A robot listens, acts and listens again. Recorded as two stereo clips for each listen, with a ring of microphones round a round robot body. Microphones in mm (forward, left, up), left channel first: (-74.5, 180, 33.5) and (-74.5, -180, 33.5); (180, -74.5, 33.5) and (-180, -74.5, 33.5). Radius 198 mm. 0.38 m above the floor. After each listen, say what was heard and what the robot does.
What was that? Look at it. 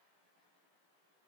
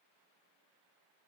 Keep listening.
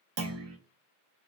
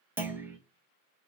The clunk: 95° right. Turn 95° right.
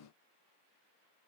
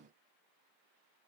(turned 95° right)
Facing where the clunk came from. I can't hear it now.